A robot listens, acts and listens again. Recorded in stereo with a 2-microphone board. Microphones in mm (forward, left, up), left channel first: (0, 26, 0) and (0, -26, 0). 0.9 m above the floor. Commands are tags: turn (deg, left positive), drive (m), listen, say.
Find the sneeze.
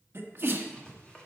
<turn deg="-45"/>
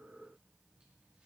<listen/>
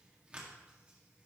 <say>I heard a sneeze, but can't make it out now. It was about straight ahead or 90° right.</say>